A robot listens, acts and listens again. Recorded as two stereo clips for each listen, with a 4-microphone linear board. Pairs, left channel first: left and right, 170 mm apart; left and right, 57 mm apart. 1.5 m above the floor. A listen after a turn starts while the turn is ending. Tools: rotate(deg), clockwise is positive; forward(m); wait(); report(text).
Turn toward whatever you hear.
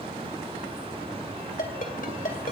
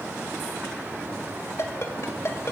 rotate(-55)
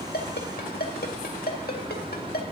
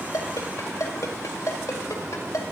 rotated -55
rotate(-65)
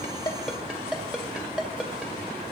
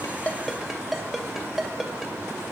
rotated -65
report("Facing the ringtone, 2 to 4 m away.")